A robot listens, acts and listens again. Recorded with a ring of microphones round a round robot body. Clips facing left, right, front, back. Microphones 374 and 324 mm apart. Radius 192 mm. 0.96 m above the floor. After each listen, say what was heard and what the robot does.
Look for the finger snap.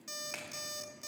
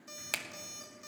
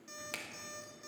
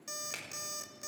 The finger snap: 85° right. Turn 85° right.
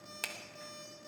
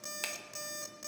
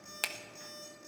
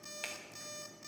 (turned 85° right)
Facing the finger snap.